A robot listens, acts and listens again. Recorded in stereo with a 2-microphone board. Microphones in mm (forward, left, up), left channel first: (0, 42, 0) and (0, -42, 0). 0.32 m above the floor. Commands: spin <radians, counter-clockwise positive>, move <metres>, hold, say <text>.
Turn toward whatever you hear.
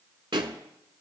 spin -1.22
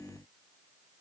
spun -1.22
hold
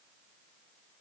say I heard a pop, but can't make it out now. It was about straight ahead or 40° right.